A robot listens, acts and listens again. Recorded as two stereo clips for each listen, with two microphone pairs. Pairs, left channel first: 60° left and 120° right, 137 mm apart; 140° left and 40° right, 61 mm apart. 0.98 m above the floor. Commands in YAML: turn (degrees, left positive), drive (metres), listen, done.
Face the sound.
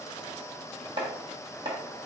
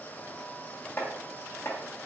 turn: -165
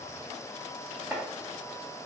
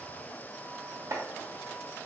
turn: -40
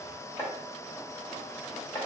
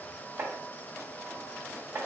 done: "Found it: chopping, straight ahead."